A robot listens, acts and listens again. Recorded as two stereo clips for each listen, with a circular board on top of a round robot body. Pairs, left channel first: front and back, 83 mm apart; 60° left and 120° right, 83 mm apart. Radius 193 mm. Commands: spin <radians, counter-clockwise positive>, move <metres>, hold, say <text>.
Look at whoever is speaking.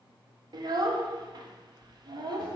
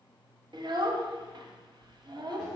spin -2.62
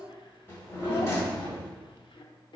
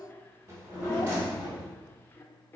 say Facing the child speaking.